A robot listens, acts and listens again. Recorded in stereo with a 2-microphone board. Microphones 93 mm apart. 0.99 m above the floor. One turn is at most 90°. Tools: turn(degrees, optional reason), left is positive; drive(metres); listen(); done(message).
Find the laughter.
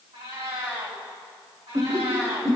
turn(degrees=-40, reason="The laughter: about 40° right or 140° right.")
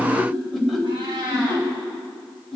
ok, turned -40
done("Found it: laughter, straight ahead, over 4 m away.")